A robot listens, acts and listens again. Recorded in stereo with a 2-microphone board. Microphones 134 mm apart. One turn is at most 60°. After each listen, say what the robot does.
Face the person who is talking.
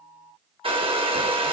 Keep listening.
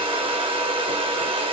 Keep listening.
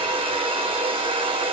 I can't make out anyone speaking, only a hair dryer.